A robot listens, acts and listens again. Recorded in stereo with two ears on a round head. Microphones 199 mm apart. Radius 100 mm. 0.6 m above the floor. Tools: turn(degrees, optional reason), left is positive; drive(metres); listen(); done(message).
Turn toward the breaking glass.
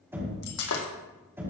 turn(degrees=90)
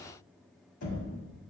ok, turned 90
done("I heard breaking glass from this way, but can't make it out now.")